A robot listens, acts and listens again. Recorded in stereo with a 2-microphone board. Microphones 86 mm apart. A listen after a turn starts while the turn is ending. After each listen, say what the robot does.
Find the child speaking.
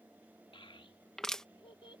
Turn 90° left.
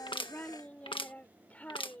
Turn 20° left.
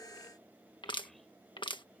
Keep listening.
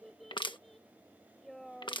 Facing the child speaking.